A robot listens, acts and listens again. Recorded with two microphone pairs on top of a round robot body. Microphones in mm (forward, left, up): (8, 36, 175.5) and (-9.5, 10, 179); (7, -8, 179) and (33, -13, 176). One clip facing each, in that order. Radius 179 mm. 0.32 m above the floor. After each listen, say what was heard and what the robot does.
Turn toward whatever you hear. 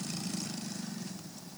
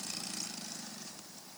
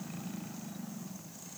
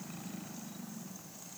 Keep listening.
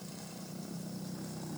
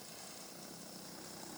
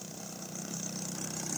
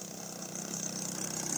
Keep listening.
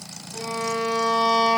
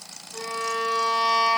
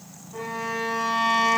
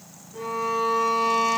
The violin: 155° left. Turn 155° left.
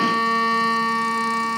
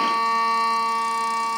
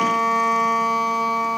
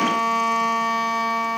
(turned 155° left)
The violin is now 15° left. Turn 15° left.
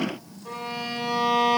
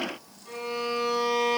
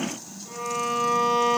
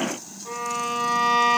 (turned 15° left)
Found it: a violin, straight ahead, 2 to 4 m away.